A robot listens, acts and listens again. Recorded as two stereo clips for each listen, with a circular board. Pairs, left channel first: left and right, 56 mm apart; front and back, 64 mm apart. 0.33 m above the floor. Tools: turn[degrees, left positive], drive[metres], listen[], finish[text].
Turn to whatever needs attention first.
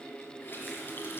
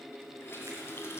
Action: listen[]
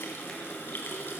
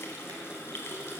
Action: listen[]
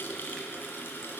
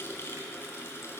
Action: finish[I can't make out anything urgent, only a running tap.]